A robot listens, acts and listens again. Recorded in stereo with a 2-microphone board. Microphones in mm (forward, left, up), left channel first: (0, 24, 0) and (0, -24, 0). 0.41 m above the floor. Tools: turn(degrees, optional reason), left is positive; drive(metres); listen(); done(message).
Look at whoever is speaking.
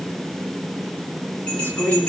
turn(degrees=55, reason="The woman speaking: about 55° left or 125° left.")
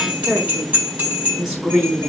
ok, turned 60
done("Facing the woman speaking.")